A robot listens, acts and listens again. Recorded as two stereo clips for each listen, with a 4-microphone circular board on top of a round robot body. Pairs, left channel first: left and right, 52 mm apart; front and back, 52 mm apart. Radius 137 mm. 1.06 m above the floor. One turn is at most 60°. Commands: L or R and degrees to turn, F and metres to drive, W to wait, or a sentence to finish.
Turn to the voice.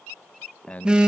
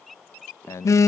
L25
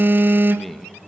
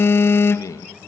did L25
Found it: a man speaking, straight ahead, 1 to 2 m away.